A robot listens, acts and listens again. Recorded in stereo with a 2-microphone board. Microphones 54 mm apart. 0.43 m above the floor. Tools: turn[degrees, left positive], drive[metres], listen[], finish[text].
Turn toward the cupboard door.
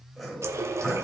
Action: listen[]
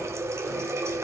Action: listen[]
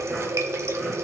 Action: finish[I can't make out a cupboard door, only a running tap and sawing.]